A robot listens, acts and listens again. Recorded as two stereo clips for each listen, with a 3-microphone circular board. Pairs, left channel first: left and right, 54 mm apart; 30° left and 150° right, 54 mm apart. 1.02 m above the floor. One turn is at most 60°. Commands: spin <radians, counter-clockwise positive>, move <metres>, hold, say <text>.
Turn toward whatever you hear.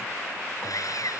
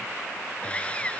spin 1.05
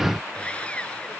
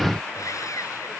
spin 0.44
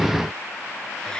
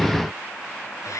hold
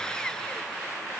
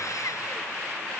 hold
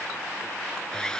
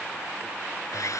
spin 0.26
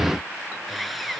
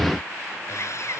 say Found it: sawing, straight ahead.